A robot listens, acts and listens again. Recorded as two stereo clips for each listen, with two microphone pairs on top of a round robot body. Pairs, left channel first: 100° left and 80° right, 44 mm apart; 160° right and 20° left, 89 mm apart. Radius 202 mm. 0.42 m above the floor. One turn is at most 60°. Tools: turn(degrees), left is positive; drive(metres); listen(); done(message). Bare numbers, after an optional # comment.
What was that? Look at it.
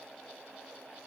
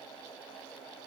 listen()
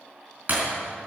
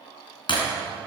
# The breaking glass: 125° right.
turn(-60)
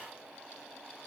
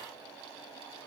# Nothing new. It was at 65° right.
turn(-60)
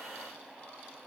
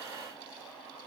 done("Facing where the breaking glass came from. I can't hear it now.")